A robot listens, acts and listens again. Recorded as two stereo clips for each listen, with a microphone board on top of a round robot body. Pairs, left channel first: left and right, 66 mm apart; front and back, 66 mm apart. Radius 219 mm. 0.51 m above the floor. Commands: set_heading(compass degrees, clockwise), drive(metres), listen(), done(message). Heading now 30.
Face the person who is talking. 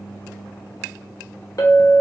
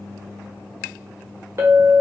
listen()
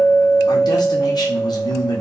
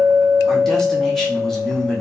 set_heading(305)
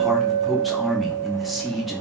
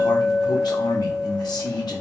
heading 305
done("Found it: a man speaking, straight ahead, 1 to 2 m away.")